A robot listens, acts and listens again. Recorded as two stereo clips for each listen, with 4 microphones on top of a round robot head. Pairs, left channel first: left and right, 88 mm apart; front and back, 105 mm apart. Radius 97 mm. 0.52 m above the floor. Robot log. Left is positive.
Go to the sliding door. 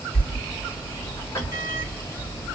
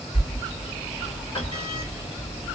note: The sliding door: 35° left.
cmd yaw +35
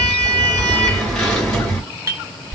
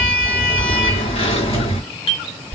note: The sliding door is now 10° left.
cmd yaw +10
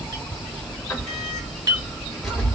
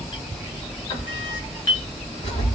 cmd fwd 1.0
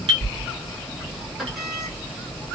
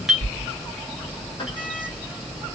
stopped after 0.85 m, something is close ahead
end: Arrived at the sliding door, straight ahead.